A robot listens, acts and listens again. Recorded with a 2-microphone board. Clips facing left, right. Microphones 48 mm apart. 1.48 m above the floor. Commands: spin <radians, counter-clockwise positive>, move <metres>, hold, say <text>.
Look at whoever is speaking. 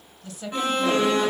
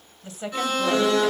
spin -0.26
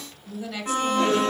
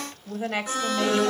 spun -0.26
spin -2.62
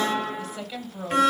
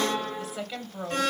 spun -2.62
spin -0.35
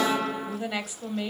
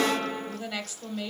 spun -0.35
say Found it: a woman speaking, straight ahead, 1 to 2 m away.